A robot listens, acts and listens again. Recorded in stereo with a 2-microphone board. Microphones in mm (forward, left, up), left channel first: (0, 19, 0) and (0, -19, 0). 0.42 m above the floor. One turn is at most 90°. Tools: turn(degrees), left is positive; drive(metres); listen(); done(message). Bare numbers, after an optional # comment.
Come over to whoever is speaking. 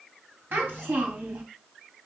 # The child speaking: about 70° right or 110° right.
turn(-70)
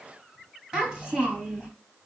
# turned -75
# So it is at 20° right.
turn(-20)
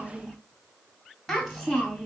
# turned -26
drive(1.0)
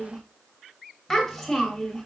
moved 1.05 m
# The child speaking is now 15° left.
turn(15)
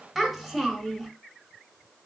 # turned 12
drive(1.0)
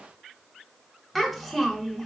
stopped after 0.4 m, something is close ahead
done("I am next to the child speaking.")